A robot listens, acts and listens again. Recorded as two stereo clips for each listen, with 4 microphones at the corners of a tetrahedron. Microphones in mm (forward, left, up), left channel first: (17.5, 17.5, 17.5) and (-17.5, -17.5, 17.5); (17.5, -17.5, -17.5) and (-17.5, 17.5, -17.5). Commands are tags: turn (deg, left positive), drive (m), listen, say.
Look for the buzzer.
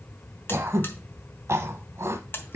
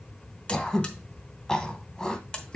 <turn deg="20"/>
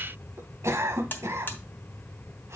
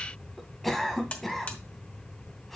<turn deg="10"/>
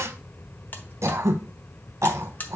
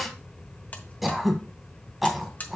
<say>Found it: a buzzer, straight ahead, 1 to 2 m away.</say>